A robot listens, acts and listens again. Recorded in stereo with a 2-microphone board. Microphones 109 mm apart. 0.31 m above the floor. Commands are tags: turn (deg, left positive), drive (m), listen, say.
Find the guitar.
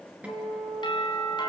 <turn deg="-30"/>
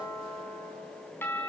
<listen/>
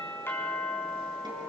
<listen/>
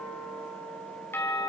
<turn deg="-135"/>
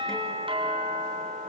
<listen/>
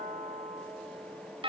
<listen/>
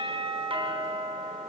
<say>I heard a guitar from this way, but can't make it out now.</say>